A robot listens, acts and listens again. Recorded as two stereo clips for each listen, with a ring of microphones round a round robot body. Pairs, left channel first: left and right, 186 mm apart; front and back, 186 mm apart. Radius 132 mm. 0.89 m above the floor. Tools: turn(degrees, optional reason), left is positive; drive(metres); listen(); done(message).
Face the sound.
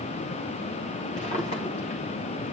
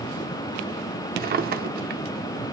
turn(degrees=150, reason="The drawer: 150° left.")
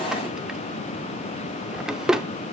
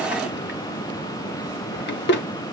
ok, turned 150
done("Facing the drawer.")